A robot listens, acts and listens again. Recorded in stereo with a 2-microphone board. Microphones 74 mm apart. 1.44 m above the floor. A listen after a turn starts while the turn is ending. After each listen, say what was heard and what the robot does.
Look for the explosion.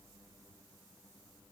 Keep listening.
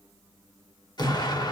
The explosion: about 65° left or 115° left. Turn 65° left.
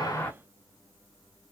Keep listening.
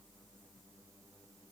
I heard an explosion, but can't make it out now. It was about straight ahead or 50° left.